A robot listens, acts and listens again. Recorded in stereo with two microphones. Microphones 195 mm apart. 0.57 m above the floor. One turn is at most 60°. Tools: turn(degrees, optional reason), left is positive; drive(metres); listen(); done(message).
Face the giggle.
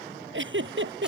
turn(degrees=-60)
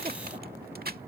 turn(degrees=-30, reason="Nothing new. It was at 30° right.")
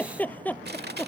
turn(degrees=10, reason="The giggle is now 10° left.")
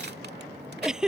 done("Facing the giggle.")